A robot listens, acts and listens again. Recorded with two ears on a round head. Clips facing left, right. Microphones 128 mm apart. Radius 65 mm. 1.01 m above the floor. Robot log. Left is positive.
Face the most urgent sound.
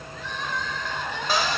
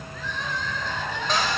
note: The crying: about 70° right or 110° right.
cmd yaw -70
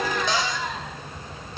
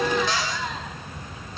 end: Facing the crying.